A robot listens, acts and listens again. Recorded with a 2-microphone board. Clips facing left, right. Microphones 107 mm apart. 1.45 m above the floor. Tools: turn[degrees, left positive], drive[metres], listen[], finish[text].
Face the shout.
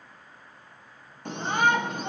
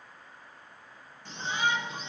Thought: The shout: about 55° left or 125° left.
Action: turn[55]
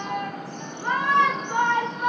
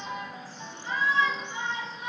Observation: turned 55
Thought: So it is at 65° left.
Action: turn[65]
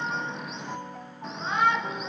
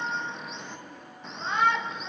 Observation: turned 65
Action: finish[Found it: a shout, straight ahead.]